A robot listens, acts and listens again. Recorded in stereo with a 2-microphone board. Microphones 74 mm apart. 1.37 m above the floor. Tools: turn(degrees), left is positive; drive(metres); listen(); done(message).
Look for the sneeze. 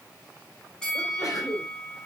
turn(degrees=55)
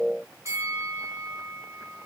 listen()
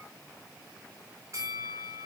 done("I heard a sneeze, but can't make it out now. It was about straight ahead or 70° left.")